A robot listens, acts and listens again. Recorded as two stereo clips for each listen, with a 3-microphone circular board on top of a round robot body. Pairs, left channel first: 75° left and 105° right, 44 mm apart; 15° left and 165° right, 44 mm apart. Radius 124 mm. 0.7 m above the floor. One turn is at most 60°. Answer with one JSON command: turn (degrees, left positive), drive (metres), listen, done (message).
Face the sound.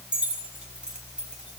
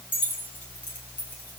{"turn": -35}
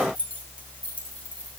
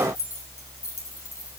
{"turn": 15}
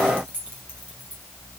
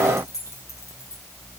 {"done": "Facing the keys jangling, over 4 m away."}